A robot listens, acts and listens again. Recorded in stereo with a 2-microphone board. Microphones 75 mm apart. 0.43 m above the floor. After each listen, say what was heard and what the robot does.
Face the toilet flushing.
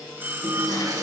The toilet flushing: about 70° right or 110° right. Turn 70° right.
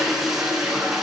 Facing the toilet flushing, over 4 m away.